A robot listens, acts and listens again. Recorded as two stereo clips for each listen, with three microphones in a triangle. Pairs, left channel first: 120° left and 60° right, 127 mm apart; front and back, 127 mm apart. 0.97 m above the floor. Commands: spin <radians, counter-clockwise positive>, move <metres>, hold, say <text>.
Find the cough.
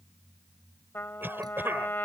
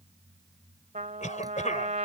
spin 0.26
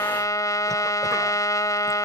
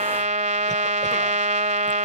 hold
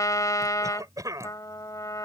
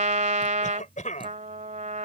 say Facing the cough.